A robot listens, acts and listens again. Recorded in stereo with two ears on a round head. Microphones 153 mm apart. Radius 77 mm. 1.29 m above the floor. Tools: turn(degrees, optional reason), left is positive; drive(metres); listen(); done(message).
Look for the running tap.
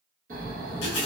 turn(degrees=75, reason="The running tap: about 75° left or 105° left.")
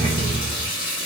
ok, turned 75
turn(degrees=25, reason="So it is at 25° left.")
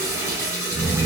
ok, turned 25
turn(degrees=-15, reason="The running tap is now 15° right.")
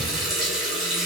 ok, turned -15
done("Facing the running tap.")